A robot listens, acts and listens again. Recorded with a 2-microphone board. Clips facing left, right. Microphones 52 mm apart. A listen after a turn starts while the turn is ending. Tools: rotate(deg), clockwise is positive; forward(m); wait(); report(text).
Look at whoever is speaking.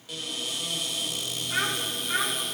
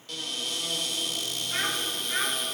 rotate(-90)
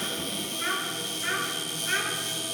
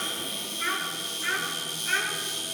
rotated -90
rotate(-10)
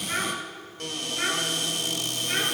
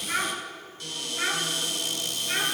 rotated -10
report("Facing the child speaking, over 4 m away.")